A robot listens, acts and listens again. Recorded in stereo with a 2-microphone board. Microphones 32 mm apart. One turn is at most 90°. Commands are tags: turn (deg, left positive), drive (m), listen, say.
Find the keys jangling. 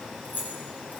<turn deg="90"/>
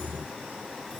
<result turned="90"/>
<turn deg="-10"/>
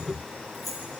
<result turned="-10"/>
<say>Found it: keys jangling, straight ahead.</say>